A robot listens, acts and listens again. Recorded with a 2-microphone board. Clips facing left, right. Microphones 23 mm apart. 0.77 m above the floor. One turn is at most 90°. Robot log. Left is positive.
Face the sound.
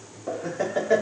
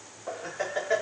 cmd yaw -30
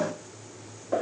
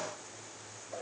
note: So it is at 40° left.
cmd yaw +40
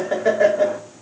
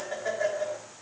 note: The laughter is now 35° left.
cmd yaw +35
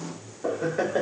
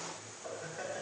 note: The laughter is now 40° left.
cmd yaw +40
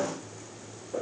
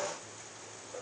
note: The laughter is now 15° left.
cmd yaw +15
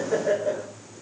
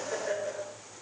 note: The laughter is now 10° left.
cmd yaw +10
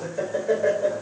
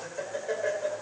end: Found it: laughter, straight ahead, 2 to 4 m away.